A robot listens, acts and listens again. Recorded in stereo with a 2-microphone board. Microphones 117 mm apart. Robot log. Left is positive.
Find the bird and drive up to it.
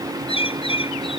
note: The bird: about 55° left or 125° left.
cmd yaw +55
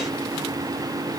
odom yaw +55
cmd idle
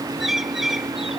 cmd fwd 1.0
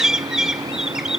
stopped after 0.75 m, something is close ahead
end: Something is in my way. I am facing the bird but have not reached it.